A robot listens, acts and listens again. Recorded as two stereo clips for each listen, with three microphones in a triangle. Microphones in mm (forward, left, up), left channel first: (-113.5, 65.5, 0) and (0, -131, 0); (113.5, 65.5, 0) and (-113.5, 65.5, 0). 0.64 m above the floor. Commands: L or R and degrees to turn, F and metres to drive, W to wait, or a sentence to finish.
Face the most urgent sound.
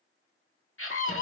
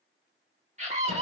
L120
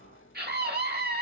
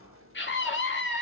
R25
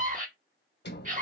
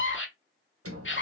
R10
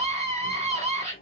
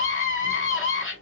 Found it: a scream, straight ahead.